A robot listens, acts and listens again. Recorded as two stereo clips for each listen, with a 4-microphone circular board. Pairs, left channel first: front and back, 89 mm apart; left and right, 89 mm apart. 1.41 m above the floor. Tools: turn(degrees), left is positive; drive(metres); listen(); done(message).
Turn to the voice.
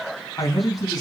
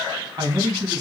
turn(degrees=-45)
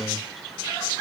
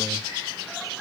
listen()
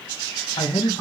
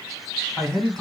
done("Found it: a man speaking, straight ahead, 2 to 4 m away.")